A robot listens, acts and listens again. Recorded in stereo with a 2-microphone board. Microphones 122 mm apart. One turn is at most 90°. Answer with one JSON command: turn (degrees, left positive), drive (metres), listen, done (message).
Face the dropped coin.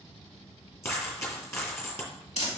{"turn": 20}
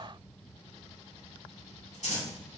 {"listen": true}
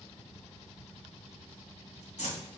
{"done": "I heard a dropped coin, but can't make it out now. It was about straight ahead or 140° left."}